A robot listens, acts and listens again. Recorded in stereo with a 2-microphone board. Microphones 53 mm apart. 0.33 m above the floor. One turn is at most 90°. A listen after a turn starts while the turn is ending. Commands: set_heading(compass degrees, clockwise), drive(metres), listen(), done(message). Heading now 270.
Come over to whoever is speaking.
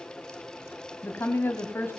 set_heading(225)
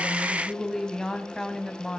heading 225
set_heading(215)
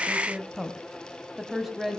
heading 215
drive(1.0)
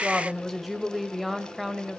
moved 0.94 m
drive(1.0)
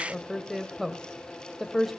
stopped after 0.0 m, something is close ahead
done("I am next to the woman speaking.")